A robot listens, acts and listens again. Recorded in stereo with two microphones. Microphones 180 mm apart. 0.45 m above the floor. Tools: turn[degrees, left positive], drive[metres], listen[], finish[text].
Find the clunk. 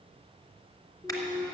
Action: turn[30]
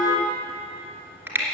Action: listen[]
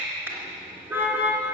Action: finish[I heard a clunk, but can't make it out now. It was about 25° right or 145° left.]